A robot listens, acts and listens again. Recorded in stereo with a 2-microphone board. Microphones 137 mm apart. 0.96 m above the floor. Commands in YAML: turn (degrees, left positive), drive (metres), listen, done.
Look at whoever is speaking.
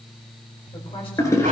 turn: 45
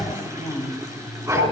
turn: 100
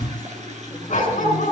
listen: true
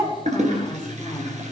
listen: true
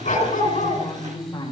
turn: 25
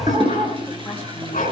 listen: true
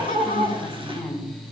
done: "Found it: a woman speaking, straight ahead, 2 to 4 m away."